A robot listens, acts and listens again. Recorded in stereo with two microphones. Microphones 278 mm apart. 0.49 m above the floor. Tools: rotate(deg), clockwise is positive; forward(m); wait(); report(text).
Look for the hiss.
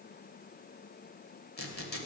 wait()
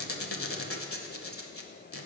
wait()
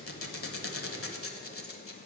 report("I can't make out a hiss, only a squeak.")